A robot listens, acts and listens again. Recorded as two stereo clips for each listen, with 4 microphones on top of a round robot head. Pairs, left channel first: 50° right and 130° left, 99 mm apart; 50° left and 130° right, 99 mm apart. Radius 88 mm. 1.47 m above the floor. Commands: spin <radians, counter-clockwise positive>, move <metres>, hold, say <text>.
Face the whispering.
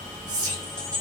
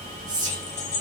spin 3.14
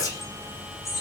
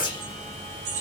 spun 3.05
hold
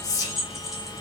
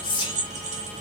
say Found it: whispering, straight ahead.